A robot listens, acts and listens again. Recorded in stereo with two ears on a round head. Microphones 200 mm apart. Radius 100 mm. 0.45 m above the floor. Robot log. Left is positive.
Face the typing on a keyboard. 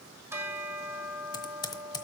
note: The typing on a keyboard: about 20° left or 160° left.
cmd yaw +20
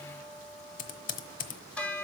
note: So it is at 140° left.
cmd yaw +140
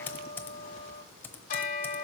note: The typing on a keyboard is now 10° left.
cmd yaw +10
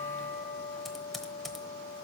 end: Found it: typing on a keyboard, straight ahead, under 1 m away.